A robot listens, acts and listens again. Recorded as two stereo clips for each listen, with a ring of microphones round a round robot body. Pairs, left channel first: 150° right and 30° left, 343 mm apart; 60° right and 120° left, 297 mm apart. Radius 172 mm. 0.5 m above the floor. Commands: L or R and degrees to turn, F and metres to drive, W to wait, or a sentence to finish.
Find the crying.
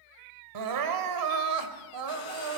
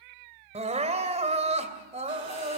L55
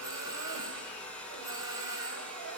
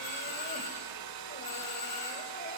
W
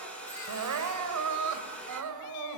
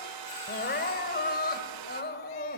Found it: crying, straight ahead, 2 to 4 m away.